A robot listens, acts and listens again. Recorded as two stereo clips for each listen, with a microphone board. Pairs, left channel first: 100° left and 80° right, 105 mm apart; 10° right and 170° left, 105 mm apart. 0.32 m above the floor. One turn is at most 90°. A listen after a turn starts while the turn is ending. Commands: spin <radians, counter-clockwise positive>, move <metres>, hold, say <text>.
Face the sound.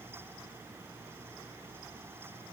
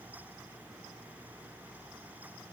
hold
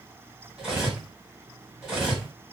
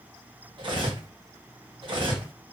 spin -1.57
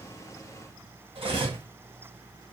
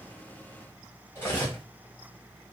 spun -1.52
spin -1.31
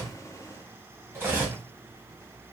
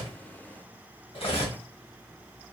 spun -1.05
spin -0.26
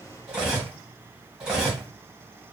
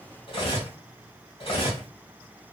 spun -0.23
say Found it: cutlery clinking, straight ahead, 1 to 2 m away.